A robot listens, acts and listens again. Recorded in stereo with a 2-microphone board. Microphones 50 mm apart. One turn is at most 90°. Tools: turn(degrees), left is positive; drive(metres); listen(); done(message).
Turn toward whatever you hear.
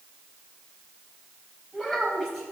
turn(degrees=30)
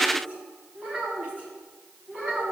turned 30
turn(degrees=-25)
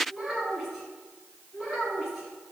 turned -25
done("Facing the child speaking.")